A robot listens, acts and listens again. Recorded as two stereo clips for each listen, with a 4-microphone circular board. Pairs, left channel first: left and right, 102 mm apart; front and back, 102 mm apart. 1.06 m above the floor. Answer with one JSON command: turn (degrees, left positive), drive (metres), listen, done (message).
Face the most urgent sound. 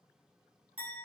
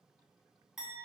{"listen": true}
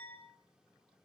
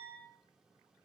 {"listen": true}
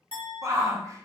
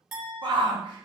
{"turn": -145}
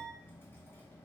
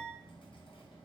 {"listen": true}
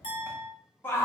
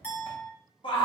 {"turn": 25}
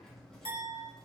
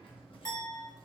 {"listen": true}
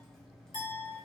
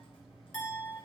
{"listen": true}
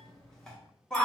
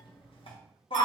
{"done": "Found it: a shout, straight ahead."}